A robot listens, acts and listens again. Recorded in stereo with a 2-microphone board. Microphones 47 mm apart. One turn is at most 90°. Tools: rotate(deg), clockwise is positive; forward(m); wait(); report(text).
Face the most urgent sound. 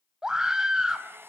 rotate(30)
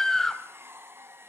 rotate(-15)
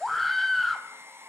report("Found it: a scream, straight ahead.")